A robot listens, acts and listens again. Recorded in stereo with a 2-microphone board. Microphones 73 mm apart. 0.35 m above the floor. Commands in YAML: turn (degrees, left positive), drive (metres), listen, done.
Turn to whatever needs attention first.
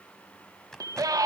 turn: -55
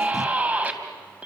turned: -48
turn: -25
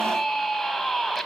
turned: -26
done: "Facing the scream."